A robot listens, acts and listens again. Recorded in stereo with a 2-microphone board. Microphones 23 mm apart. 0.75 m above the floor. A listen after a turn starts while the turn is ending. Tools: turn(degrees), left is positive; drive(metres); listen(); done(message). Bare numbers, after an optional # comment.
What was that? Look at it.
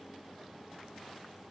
listen()
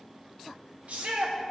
# The shout: about 65° right or 115° right.
turn(-65)
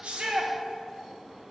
listen()
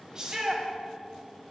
# So it is at 30° right.
turn(-30)
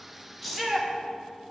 done("Found it: a shout, straight ahead, 1 to 2 m away.")